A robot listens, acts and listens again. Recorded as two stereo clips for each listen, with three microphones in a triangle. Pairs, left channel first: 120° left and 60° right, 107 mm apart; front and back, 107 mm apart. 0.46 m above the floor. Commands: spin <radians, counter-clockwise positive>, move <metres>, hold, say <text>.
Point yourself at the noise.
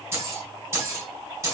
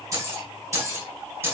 spin -2.01
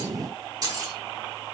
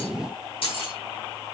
spin -0.17
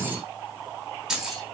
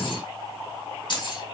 spin 0.44
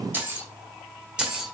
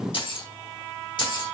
spin 0.44
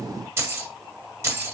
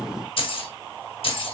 say Found it: keys jangling, straight ahead, 1 to 2 m away.